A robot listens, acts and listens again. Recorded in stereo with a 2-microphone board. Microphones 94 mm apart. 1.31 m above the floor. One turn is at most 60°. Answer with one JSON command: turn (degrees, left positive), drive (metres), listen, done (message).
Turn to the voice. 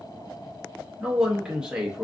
{"turn": -30}
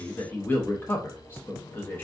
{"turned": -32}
{"turn": 25}
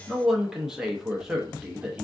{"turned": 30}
{"done": "Facing the man speaking."}